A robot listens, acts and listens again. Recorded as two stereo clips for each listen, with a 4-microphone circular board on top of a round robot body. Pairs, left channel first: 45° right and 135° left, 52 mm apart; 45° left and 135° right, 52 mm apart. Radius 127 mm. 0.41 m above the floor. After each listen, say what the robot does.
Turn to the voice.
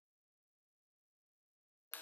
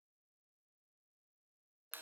Keep listening.
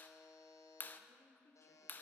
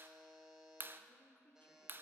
Turn 10° right.
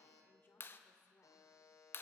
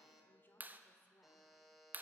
Facing the woman speaking.